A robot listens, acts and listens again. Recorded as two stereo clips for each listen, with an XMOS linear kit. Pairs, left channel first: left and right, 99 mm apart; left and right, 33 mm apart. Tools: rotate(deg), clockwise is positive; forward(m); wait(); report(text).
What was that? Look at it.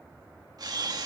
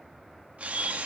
rotate(40)
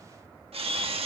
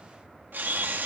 rotate(95)
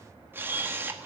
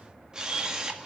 rotate(25)
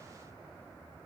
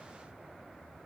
wait()
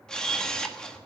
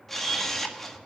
report("Found it: a camera shutter, straight ahead, 1 to 2 m away.")